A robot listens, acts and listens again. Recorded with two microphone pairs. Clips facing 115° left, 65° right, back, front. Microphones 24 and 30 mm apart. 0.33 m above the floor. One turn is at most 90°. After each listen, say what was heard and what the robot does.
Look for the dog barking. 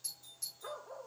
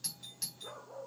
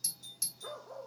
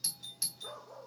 The dog barking: 125° left. Turn 90° left.
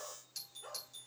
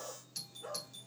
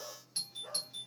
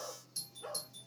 The dog barking is now 30° left. Turn 30° left.
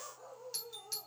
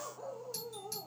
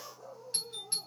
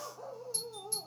Facing the dog barking.